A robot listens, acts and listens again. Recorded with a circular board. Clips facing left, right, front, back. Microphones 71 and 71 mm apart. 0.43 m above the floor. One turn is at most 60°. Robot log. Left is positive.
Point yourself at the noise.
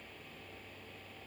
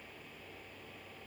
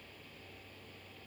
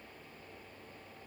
cmd idle
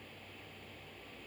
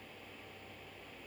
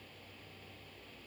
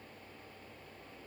cmd idle
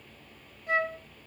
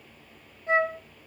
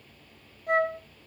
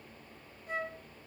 note: The flute: 25° right.
cmd yaw -25
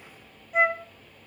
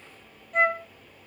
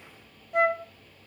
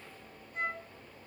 end: Facing the flute.